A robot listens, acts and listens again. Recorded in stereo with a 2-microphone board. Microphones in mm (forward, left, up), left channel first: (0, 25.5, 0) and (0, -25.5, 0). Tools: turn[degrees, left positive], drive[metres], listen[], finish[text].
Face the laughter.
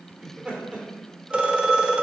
Thought: The laughter: about 15° right or 165° right.
Action: turn[-15]
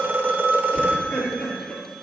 Thought: So it is at 25° left.
Action: turn[25]
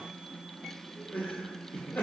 Thought: The laughter is now 45° left.
Action: turn[45]
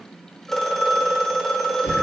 Thought: The laughter is now 40° left.
Action: turn[40]
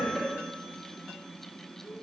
Thought: The laughter is now 25° left.
Action: turn[25]
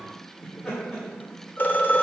Thought: The laughter is now 15° left.
Action: turn[15]
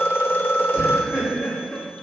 Thought: The laughter is now 10° left.
Action: turn[10]
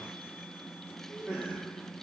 Action: finish[Facing the laughter.]